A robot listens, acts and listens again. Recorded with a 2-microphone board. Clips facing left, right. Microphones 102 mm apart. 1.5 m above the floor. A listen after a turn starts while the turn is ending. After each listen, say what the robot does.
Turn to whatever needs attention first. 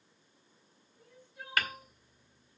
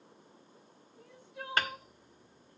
Turn 90° right.
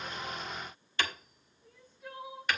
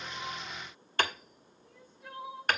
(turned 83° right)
Facing the crying.